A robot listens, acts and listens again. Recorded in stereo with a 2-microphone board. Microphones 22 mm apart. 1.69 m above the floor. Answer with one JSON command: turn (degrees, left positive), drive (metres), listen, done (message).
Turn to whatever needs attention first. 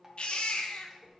{"turn": 60}
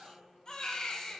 {"turn": 40}
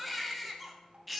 {"done": "Found it: a baby crying, straight ahead."}